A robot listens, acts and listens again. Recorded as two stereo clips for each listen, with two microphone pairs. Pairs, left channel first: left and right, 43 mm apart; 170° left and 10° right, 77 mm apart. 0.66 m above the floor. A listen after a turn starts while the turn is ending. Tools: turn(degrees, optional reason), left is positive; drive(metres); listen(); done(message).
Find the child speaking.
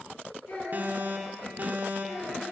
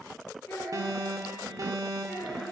turn(degrees=100, reason="The child speaking: 100° left.")
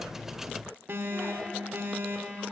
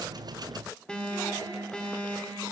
listen()
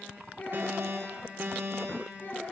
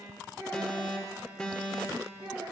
turn(degrees=40, reason="The child speaking is now 40° left.")
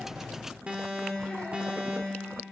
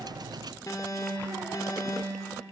listen()
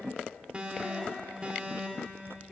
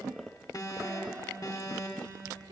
listen()
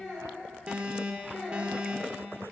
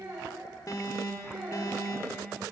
done("Found it: a child speaking, straight ahead, over 4 m away.")